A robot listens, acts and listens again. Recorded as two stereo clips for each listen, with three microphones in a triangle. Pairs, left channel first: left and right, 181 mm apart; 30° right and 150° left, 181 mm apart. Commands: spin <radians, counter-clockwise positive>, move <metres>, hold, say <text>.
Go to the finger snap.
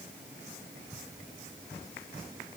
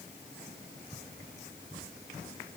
hold
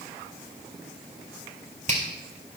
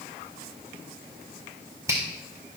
spin -2.36
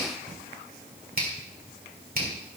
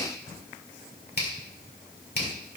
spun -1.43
spin -0.96
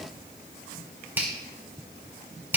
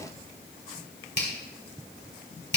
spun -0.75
spin -0.17
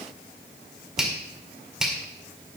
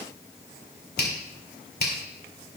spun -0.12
move 1.0
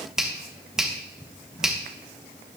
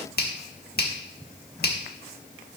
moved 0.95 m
move 1.0
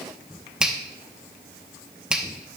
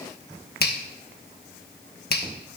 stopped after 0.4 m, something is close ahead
say Arrived at the finger snap, straight ahead.